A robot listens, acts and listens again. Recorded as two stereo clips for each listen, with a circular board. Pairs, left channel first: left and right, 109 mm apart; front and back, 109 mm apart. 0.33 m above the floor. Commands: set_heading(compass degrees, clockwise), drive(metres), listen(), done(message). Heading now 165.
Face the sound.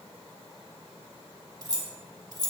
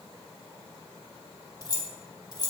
set_heading(210)
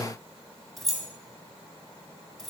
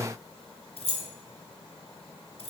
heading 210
done("Facing the keys jangling, 1 to 2 m away.")